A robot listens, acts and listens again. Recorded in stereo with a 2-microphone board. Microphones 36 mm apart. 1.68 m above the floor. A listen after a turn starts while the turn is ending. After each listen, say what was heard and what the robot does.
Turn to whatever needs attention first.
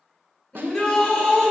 The shout: about 15° left or 165° left. Turn 15° left.
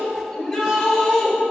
Facing the shout, 2 to 4 m away.